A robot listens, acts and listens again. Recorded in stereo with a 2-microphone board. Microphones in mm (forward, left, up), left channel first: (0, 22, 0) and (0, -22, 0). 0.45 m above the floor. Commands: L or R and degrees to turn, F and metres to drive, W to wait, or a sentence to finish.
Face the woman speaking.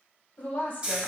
L35
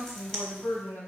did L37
L105
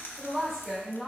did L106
Found it: a woman speaking, straight ahead.